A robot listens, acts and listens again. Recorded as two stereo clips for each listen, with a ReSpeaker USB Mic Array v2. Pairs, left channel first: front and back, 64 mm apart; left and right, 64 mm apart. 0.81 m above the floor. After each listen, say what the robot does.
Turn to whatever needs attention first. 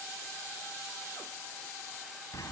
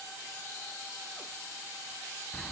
Keep listening.
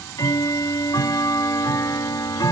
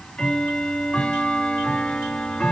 Keep listening.
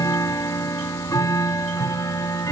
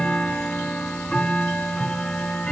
I can't make out anything urgent, only ticking.